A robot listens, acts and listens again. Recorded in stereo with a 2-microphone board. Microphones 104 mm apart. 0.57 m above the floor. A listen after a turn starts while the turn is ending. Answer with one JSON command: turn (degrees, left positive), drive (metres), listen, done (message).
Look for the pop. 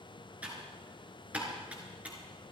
{"listen": true}
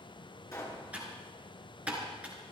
{"turn": 35}
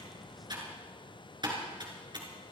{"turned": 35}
{"listen": true}
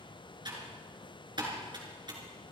{"done": "I heard a pop, but can't make it out now. It was about straight ahead or 110° left."}